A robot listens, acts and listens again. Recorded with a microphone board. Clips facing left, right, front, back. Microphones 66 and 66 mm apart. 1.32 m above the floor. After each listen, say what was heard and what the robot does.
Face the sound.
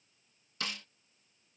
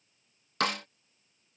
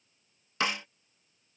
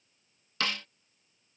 The snare drum: 70° right. Turn 70° right.
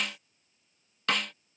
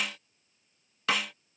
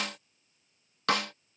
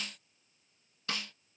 Found it: a snare drum, straight ahead.